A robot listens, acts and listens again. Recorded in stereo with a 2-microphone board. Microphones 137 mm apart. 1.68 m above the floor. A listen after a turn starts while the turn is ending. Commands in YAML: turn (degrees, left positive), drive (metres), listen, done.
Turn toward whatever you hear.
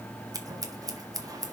turn: -30
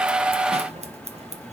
turn: -115
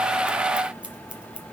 listen: true
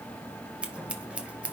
turn: -10
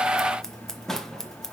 done: "Facing the scissors, 1 to 2 m away."